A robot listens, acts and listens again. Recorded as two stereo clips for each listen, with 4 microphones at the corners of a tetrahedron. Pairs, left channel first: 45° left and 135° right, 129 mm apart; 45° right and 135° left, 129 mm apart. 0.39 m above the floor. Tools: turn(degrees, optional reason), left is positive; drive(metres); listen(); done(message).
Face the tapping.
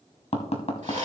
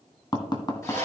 turn(degrees=10, reason="The tapping: 10° left.")
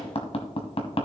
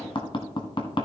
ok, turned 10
done("Found it: tapping, straight ahead, 1 to 2 m away.")